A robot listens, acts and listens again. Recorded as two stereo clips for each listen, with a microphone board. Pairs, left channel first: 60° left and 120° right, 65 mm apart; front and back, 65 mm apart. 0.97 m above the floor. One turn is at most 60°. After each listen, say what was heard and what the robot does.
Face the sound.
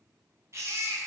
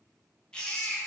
The baby crying: 75° right. Turn 60° right.
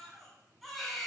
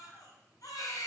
The baby crying is now 30° right. Turn 30° right.
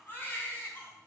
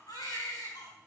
Facing the baby crying.